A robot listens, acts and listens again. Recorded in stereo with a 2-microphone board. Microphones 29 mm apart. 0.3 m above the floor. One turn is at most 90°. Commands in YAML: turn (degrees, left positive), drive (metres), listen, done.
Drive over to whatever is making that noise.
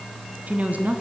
turn: -60
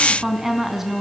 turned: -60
turn: -10
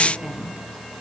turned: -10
drive: 1.0
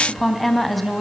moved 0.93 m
drive: 1.0
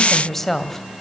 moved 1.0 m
turn: 15
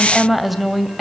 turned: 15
drive: 1.0
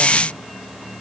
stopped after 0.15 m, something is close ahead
listen: true
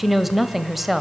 done: "Arrived at the woman speaking, straight ahead."